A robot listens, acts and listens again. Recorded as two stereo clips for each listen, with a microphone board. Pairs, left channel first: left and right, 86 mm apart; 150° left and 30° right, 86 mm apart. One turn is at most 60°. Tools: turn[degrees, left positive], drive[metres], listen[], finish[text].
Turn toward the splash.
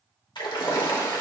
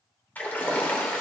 Thought: The splash: 85° left.
Action: turn[60]
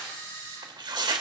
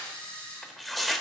Thought: Nothing new. It was at 25° left.
Action: turn[25]
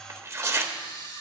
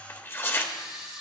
Action: finish[Facing where the splash came from. I can't hear it now.]